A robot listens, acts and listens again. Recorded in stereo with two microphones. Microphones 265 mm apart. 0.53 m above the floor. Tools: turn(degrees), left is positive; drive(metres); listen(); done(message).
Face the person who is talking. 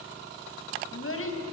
turn(degrees=50)
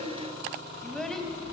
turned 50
done("Facing the child speaking.")